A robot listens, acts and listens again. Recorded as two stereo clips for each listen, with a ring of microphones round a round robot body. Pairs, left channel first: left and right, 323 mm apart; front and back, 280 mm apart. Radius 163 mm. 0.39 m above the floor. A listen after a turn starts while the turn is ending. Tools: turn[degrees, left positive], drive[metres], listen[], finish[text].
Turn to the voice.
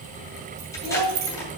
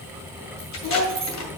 Thought: The child speaking: 35° right.
Action: turn[-35]
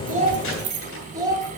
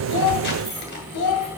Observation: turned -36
Thought: The child speaking is now 15° right.
Action: turn[-15]
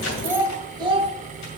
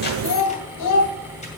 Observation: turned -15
Thought: The child speaking is now 20° right.
Action: turn[-20]
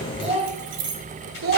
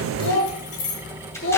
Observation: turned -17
Thought: The child speaking is now 50° right.
Action: turn[-50]
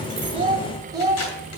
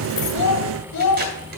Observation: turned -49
Thought: The child speaking is now 10° right.
Action: turn[-10]
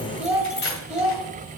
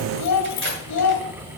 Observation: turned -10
Action: finish[Facing the child speaking, 1 to 2 m away.]